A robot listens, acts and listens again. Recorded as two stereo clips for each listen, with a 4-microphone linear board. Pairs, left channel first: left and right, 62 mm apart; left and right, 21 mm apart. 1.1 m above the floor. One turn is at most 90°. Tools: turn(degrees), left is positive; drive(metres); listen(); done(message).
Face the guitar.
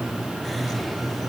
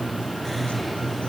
listen()
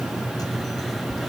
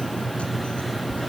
listen()
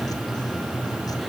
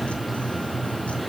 done("I can't make out a guitar.")